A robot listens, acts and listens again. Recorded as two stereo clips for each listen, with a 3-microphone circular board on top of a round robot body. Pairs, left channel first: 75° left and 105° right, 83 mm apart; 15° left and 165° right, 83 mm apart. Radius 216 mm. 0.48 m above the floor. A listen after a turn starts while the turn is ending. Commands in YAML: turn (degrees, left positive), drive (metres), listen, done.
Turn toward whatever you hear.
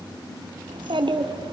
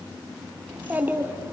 turn: -105
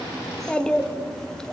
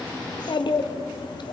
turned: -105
turn: -10
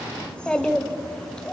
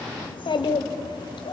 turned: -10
turn: -10
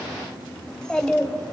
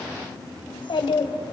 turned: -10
turn: -10
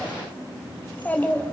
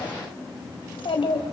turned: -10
done: "Facing the child speaking, 2 to 4 m away."